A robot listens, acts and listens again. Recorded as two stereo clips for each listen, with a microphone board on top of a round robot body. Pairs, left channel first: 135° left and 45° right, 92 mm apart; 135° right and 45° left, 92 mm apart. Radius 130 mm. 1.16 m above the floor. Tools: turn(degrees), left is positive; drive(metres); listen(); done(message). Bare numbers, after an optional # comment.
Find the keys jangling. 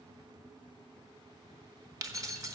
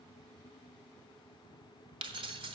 # The keys jangling: 10° left.
turn(10)
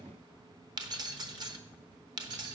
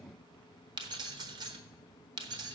done("Facing the keys jangling, 1 to 2 m away.")